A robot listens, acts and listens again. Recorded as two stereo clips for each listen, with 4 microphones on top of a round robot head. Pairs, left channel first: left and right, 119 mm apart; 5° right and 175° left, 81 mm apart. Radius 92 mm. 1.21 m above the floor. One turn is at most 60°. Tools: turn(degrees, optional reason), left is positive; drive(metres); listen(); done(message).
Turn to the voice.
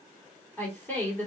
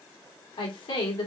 turn(degrees=15, reason="The woman speaking: 15° left.")
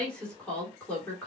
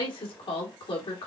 turn(degrees=10, reason="The woman speaking is now 10° left.")
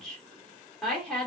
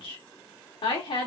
done("Found it: a woman speaking, straight ahead.")